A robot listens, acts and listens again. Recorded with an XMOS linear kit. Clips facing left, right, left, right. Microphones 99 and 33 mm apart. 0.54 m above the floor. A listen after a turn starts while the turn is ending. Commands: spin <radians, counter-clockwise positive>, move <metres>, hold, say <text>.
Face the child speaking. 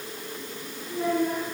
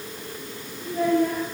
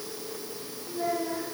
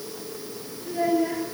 spin -1.13
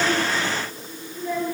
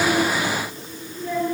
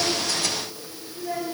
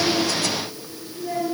say Found it: a child speaking, straight ahead.